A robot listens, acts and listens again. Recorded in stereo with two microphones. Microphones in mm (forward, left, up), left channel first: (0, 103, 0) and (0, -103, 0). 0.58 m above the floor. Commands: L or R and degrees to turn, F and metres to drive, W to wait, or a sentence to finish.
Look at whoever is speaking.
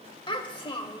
L25
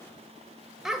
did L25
Facing the child speaking.